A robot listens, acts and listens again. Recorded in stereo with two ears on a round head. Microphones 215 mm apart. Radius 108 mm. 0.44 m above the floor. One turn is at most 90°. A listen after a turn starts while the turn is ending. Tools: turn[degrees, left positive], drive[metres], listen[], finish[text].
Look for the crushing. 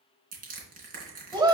Thought: The crushing: about 35° right or 145° right.
Action: turn[-35]
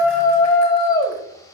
Action: listen[]
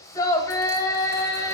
Action: listen[]
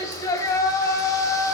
Action: finish[I heard crushing, but can't make it out now. It was about straight ahead or 110° right.]